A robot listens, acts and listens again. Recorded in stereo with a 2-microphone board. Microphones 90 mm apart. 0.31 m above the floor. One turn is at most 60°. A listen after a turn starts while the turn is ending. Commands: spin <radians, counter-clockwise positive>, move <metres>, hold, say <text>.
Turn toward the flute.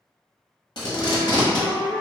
spin 0.52
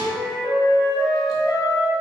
spin 1.05
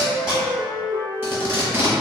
spin 1.05
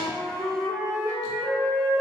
spin -0.35
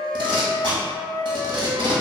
say Found it: a flute, straight ahead.